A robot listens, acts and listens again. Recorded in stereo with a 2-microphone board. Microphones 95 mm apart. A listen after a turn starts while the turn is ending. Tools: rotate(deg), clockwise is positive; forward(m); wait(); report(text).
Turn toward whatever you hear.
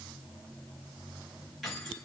rotate(-30)
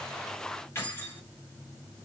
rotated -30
rotate(-150)
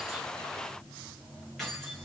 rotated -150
report("Found it: keys jangling, straight ahead.")